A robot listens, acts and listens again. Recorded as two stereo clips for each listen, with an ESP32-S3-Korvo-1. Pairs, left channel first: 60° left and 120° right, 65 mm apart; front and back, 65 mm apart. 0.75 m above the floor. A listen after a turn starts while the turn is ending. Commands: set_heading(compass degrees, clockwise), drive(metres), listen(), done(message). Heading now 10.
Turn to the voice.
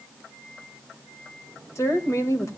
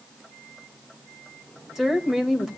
set_heading(270)
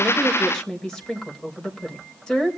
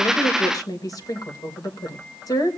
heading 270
set_heading(285)
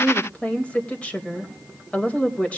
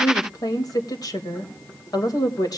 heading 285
set_heading(295)
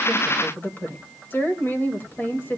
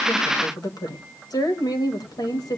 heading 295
done("Found it: a woman speaking, straight ahead.")